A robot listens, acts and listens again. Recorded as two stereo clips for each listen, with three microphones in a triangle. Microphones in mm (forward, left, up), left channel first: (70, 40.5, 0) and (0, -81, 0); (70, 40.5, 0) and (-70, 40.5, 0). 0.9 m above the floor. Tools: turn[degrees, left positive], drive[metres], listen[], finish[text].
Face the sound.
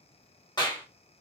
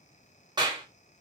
Thought: The clap: 120° left.
Action: turn[120]
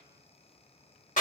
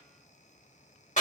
Thought: The clap is now 30° left.
Action: turn[30]
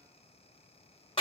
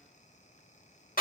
Thought: The clap is now 10° left.
Action: turn[10]
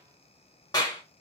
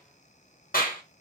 Action: finish[Facing the clap, 1 to 2 m away.]